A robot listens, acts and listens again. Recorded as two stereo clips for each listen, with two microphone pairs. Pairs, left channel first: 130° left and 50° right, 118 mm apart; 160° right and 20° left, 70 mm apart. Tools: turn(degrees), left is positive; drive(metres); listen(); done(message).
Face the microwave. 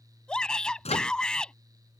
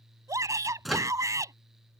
turn(degrees=110)
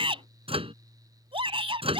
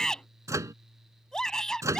turn(degrees=-20)
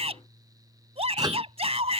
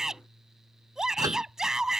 listen()
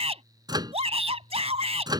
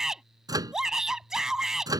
done("Found it: a microwave, straight ahead.")